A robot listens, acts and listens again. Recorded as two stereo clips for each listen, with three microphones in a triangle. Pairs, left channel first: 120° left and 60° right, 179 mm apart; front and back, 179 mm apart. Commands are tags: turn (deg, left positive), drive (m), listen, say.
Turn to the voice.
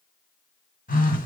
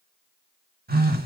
<listen/>
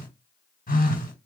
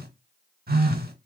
<listen/>
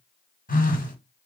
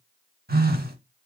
<say>I can't make out anyone speaking, only a phone buzzing.</say>